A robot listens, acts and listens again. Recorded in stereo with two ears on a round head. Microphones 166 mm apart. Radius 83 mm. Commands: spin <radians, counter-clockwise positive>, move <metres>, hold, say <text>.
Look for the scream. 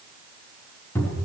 hold
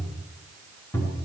hold
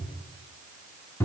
say I can't make out a scream to turn to.